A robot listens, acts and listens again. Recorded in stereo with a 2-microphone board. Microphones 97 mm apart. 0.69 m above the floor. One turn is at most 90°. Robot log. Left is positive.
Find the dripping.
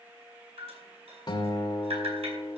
cmd yaw -90
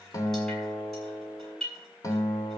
end: Found it: dripping, straight ahead, over 4 m away.